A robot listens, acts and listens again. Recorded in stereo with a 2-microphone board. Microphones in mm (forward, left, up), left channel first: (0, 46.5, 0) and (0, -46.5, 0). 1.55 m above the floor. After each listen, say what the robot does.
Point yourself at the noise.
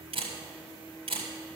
Turn 70° right.
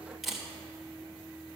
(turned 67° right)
Found it: a camera shutter, straight ahead, 2 to 4 m away.